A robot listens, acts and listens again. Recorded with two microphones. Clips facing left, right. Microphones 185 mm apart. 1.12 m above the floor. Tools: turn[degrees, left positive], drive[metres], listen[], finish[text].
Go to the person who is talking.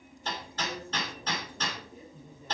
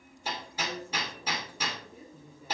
Action: turn[-30]
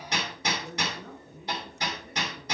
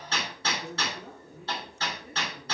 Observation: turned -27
Thought: So it is at 150° right.
Action: turn[-150]
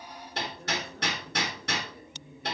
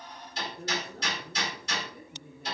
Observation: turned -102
Thought: The woman speaking is now 45° right.
Action: turn[-45]
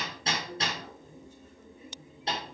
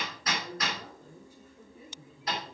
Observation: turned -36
Thought: The woman speaking is now 10° right.
Action: turn[-10]
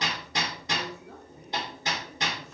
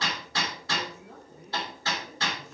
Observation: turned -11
Action: drive[1.0]
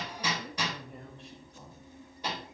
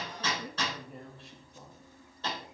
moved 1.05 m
Action: drive[1.0]
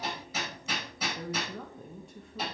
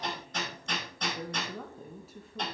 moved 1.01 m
Action: drive[1.0]
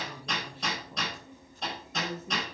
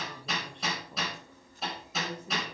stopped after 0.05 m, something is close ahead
Action: finish[Arrived at the woman speaking, straight ahead.]